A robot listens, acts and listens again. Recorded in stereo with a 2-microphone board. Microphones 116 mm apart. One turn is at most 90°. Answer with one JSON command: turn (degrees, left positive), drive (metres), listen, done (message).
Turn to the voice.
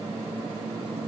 {"listen": true}
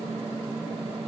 {"listen": true}
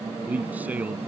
{"turn": -30}
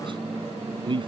{"turn": -90}
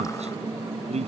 {"turn": -65}
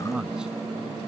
{"done": "Found it: a man speaking, straight ahead."}